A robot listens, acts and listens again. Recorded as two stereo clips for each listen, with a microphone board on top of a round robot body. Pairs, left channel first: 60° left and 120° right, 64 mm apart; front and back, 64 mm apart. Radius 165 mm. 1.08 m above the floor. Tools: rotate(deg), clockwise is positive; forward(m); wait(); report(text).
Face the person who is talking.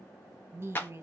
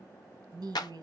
rotate(175)
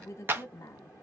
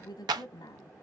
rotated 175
rotate(-15)
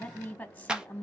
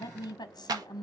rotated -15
rotate(10)
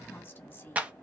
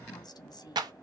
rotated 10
report("Facing the woman speaking.")